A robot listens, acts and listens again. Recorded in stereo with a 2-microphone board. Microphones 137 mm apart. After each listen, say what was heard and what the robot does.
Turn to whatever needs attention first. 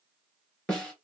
Keep listening.
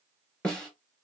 Keep listening.
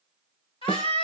The scream: about 40° left or 140° left. Turn 40° left.
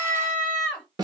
Found it: a scream, straight ahead, 2 to 4 m away.